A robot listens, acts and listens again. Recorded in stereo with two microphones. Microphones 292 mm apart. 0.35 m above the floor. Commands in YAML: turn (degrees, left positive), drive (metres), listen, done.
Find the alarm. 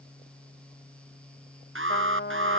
turn: -45
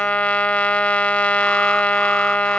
listen: true
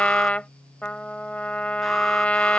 listen: true
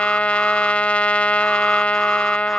done: "I heard an alarm, but can't make it out now. It was about straight ahead or 90° right."